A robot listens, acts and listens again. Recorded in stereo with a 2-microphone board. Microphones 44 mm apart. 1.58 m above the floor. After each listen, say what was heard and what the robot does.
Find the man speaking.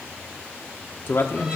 The man speaking: about 55° left or 125° left. Turn 55° left.
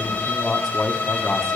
So it is at 10° left. Turn 10° left.
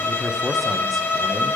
Keep listening.
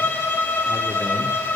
Keep listening.
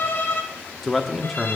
Found it: a man speaking, straight ahead, 1 to 2 m away.